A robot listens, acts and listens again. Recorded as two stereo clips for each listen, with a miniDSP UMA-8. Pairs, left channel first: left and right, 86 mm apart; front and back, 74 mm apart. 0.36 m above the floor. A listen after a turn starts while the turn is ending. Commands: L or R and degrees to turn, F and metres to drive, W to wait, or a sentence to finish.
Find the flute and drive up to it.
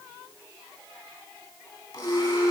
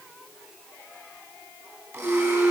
R165
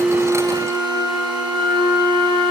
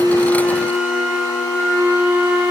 R45
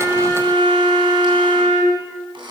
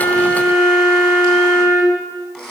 R15
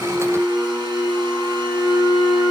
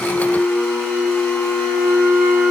F1.0
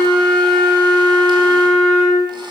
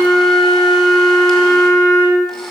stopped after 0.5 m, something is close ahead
Blocked. The flute is further on, straight ahead.